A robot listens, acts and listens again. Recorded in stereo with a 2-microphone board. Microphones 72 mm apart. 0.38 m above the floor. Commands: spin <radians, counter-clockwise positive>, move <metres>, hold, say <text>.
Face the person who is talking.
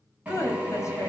spin 0.70
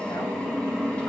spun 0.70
hold
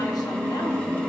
hold
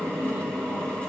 say I heard a woman speaking, but can't make it out now. It was about straight ahead or 100° left.